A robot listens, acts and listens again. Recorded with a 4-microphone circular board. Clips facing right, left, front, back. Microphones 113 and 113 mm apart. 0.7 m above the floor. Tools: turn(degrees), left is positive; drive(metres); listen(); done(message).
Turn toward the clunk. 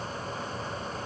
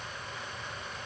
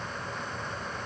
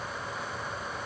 listen()
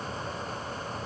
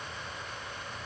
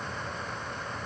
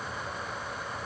listen()
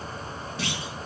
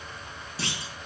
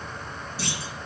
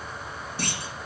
turn(degrees=145)
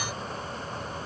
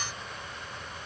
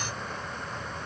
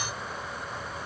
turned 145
done("Facing where the clunk came from. I can't hear it now.")